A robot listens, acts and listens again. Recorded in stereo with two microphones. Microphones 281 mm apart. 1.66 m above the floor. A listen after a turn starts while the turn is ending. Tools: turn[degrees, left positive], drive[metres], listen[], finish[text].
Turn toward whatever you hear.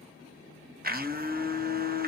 Thought: The blender: about 35° right or 145° right.
Action: turn[-35]
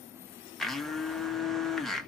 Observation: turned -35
Action: finish[Facing the blender, under 1 m away.]